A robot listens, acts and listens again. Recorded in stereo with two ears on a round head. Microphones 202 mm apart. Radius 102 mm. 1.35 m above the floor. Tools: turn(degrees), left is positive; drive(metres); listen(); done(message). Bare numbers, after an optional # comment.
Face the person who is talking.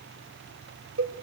listen()
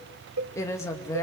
turn(30)
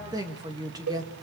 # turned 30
# So it is at 15° right.
turn(-15)
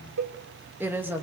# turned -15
# The woman speaking is now 10° right.
turn(-10)
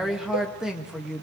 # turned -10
done("Facing the woman speaking, 2 to 4 m away.")